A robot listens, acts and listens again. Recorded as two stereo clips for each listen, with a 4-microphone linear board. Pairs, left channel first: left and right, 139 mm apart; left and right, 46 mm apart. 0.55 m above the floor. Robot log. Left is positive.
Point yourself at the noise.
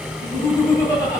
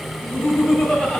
note: The laughter: about 25° left or 155° left.
cmd yaw +25
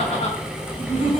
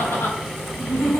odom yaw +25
note: So it is at 120° left.
cmd yaw +120
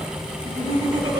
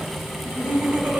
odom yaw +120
note: The laughter is now 35° right.
cmd yaw -35
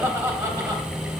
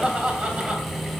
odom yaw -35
note: The laughter is now 25° right.
cmd yaw -25
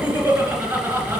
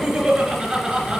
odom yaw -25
note: The laughter is now 15° right.
cmd yaw -15
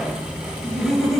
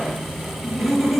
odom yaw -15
end: Found it: laughter, straight ahead, 2 to 4 m away.